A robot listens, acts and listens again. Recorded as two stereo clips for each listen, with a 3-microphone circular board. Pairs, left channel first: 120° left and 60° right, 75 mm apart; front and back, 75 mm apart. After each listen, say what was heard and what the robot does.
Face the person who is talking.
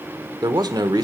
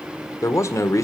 The man speaking: 45° right. Turn 45° right.
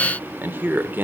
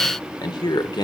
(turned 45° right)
Found it: a man speaking, straight ahead.